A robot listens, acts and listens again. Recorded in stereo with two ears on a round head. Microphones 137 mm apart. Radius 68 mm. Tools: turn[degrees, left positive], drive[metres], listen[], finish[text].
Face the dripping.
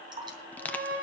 Thought: The dripping: about 30° right or 150° right.
Action: turn[-30]
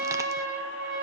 Action: listen[]
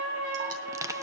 Action: listen[]
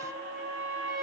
Action: finish[I heard dripping, but can't make it out now. It was about straight ahead or 120° right.]